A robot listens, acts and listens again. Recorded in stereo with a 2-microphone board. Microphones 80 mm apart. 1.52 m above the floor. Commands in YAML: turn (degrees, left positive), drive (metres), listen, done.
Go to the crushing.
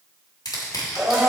turn: 65
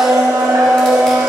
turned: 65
listen: true
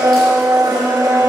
listen: true
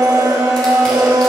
done: "I heard crushing, but can't make it out now. It was about straight ahead or 50° left. I did not reach it."